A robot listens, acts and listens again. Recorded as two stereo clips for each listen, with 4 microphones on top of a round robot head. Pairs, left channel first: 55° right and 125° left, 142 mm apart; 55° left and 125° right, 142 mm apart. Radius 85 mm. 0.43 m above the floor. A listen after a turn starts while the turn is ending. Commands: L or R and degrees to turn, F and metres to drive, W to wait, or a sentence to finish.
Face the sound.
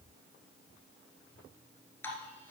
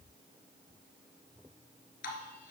L20
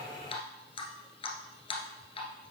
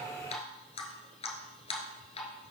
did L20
Facing the dripping.